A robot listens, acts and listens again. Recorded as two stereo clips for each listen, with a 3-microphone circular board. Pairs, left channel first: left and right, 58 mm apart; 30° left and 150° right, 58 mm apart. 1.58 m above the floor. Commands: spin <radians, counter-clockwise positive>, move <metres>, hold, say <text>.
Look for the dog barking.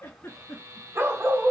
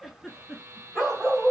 spin -1.13
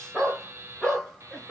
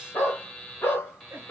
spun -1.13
spin 0.26
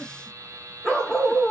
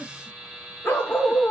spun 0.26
spin 0.52
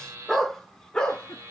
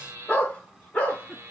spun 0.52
spin 0.79
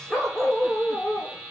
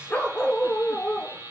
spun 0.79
say Found it: a dog barking, straight ahead, 1 to 2 m away.